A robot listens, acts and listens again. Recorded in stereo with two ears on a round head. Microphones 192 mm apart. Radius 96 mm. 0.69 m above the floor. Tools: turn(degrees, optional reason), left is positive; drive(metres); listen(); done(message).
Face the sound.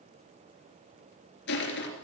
turn(degrees=55, reason="The crushing: about 55° left or 125° left.")
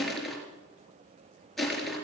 done("Facing the crushing.")